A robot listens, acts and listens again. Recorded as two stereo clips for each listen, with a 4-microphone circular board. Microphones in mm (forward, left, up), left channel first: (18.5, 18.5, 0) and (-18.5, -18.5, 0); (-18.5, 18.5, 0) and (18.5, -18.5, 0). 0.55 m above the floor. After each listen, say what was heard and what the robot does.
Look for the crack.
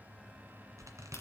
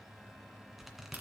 The crack: 15° left. Turn 15° left.
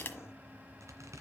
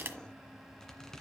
Found it: a crack, straight ahead, 1 to 2 m away.